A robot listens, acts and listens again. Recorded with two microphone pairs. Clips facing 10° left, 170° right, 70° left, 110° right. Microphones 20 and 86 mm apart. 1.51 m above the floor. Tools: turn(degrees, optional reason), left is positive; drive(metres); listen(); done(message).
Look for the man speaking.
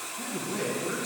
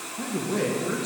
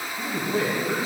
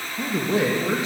turn(degrees=-100, reason="The man speaking: 100° right.")
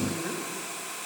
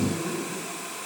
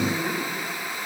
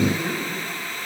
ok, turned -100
turn(degrees=-15, reason="The man speaking is now 15° right.")
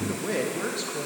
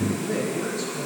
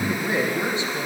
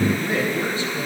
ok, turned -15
done("Found it: a man speaking, straight ahead, 2 to 4 m away.")